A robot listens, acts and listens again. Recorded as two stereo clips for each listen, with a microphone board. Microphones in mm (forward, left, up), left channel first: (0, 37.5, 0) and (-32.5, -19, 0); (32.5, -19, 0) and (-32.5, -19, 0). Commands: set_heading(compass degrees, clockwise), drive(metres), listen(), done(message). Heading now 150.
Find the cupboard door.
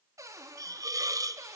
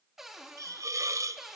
set_heading(245)
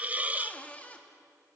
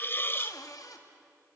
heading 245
done("Facing the cupboard door.")